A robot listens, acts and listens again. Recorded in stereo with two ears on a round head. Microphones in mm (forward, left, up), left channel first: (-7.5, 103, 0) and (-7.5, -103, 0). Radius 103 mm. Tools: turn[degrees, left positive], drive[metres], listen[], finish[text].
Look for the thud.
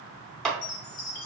Action: listen[]
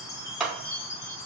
Action: listen[]
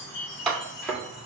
Action: turn[30]
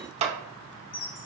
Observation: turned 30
Action: listen[]
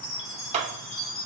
Action: finish[I heard a thud, but can't make it out now. It was about 25° right or 145° left.]